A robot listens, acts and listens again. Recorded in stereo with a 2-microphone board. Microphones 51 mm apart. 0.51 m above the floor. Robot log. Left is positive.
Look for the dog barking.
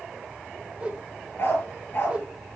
note: The dog barking: about 45° left or 135° left.
cmd yaw +45
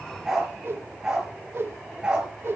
note: So it is at 15° right.
cmd yaw -15
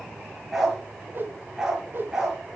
end: Found it: a dog barking, straight ahead.